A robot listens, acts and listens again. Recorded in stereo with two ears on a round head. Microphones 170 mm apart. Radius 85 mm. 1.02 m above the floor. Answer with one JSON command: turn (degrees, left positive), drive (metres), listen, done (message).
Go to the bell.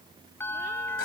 {"turn": 30}
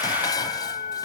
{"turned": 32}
{"turn": 135}
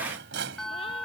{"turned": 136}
{"drive": 1.0}
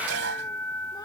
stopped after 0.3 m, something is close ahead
{"turn": 10}
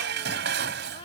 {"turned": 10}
{"listen": true}
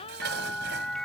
{"done": "Something is in my way. I am facing the bell but have not reached it."}